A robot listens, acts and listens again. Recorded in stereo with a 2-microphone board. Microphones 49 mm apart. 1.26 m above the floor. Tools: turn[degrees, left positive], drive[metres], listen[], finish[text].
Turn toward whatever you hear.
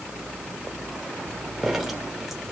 Action: listen[]
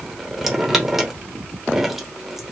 Action: turn[-30]
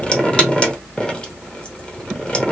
Thought: So it is at 25° left.
Action: turn[25]
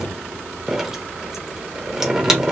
Thought: The dripping is now 10° right.
Action: turn[-10]
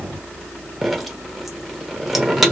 Action: finish[Facing the dripping.]